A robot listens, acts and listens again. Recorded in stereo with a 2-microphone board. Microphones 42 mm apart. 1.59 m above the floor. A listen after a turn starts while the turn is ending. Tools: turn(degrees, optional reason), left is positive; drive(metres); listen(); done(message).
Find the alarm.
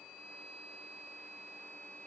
listen()
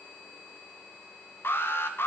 turn(degrees=75, reason="The alarm: about 75° left or 105° left.")
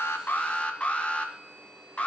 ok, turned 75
turn(degrees=30, reason="So it is at 30° left.")
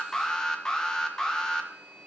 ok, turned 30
turn(degrees=15, reason="The alarm is now 15° left.")
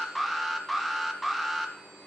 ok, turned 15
done("Facing the alarm.")